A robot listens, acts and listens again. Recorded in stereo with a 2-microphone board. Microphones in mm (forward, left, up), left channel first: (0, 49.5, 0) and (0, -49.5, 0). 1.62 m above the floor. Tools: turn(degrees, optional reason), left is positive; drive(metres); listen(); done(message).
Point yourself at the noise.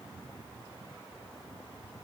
listen()
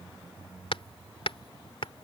turn(degrees=65, reason="The hammering: about 65° left or 115° left.")
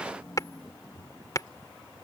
turn(degrees=40, reason="So it is at 40° left.")
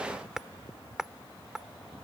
done("Facing the hammering.")